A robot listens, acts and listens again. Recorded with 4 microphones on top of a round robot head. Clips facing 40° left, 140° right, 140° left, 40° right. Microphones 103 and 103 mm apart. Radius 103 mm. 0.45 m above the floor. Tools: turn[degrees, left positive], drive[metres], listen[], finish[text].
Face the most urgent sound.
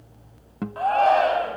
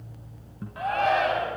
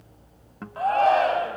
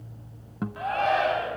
Thought: The shout: 90° left.
Action: turn[90]
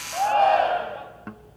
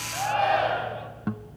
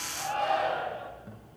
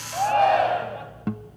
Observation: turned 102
Thought: The shout is now 15° right.
Action: turn[-15]
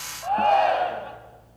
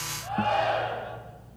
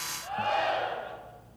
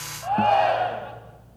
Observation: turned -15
Action: finish[Found it: a shout, straight ahead.]